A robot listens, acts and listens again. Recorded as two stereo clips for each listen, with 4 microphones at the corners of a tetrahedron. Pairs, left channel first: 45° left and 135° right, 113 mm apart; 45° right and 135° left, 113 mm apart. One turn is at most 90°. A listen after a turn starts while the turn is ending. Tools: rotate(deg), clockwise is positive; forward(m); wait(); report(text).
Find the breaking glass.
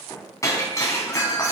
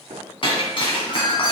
rotate(15)
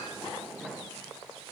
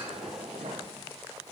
report("Facing where the breaking glass came from. I can't hear it now.")